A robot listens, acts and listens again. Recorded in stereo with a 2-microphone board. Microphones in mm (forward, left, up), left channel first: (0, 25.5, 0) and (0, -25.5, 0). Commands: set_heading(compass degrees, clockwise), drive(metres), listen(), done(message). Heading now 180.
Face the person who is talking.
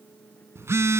listen()
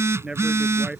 set_heading(195)
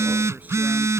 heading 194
listen()
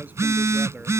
listen()
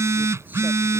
done("I heard a man speaking, but can't make it out now. It was about 5° right or 150° right.")